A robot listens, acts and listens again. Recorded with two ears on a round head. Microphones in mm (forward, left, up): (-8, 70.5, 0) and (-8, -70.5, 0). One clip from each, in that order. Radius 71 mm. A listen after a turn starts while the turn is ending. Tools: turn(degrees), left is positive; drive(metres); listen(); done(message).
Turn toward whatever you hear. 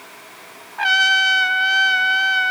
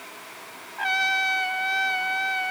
turn(degrees=35)
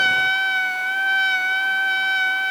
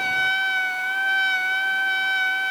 done("Facing the trumpet.")